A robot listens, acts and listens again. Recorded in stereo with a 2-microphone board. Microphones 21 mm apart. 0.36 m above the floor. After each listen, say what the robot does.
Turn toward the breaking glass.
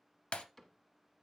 Turn 65° left.
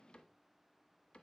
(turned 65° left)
Keep listening.
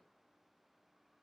I heard breaking glass, but can't make it out now. It was about straight ahead or 50° left.